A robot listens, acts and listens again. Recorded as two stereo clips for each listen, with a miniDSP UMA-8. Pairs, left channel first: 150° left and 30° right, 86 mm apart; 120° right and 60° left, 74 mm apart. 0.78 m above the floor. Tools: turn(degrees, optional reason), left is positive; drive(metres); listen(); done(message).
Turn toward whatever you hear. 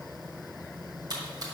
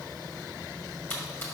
turn(degrees=-65, reason="The splash: 65° right.")
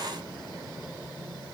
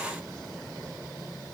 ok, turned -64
done("Facing where the splash came from. I can't hear it now.")